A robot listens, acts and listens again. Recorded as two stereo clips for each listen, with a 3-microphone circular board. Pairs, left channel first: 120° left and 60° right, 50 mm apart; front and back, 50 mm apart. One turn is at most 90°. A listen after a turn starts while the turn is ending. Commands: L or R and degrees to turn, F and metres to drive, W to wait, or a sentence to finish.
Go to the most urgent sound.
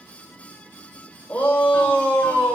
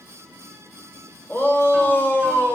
L55
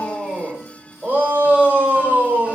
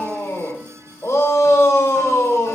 F1.0
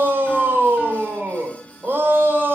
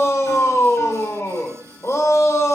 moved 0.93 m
R10
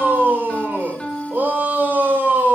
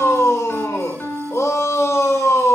F1.0
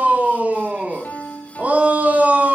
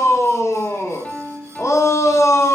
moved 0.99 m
F1.0
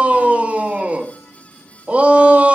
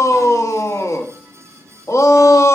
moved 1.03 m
F1.0
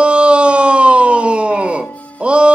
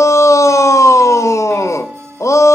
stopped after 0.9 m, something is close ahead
L10
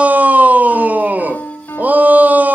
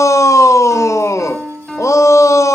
I am next to the shout.